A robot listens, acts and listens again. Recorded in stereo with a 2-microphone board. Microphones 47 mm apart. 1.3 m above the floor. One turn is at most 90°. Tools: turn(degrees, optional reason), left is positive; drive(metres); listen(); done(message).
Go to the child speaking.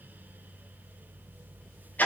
listen()
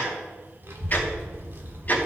turn(degrees=-60, reason="The child speaking: about 60° right or 120° right.")
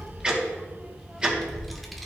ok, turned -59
drive(metres=1.0)
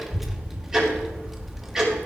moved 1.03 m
drive(metres=1.0)
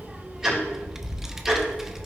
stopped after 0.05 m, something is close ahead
turn(degrees=-10, reason="The child speaking is now 10° right.")
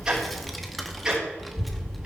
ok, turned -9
done("Arrived at the child speaking, straight ahead.")